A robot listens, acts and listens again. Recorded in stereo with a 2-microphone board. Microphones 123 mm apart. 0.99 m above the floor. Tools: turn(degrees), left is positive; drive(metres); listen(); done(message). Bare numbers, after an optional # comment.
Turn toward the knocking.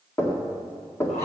# The knocking: about 20° left or 160° left.
turn(20)
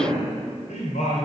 listen()
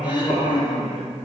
listen()
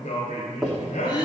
done("Facing the knocking.")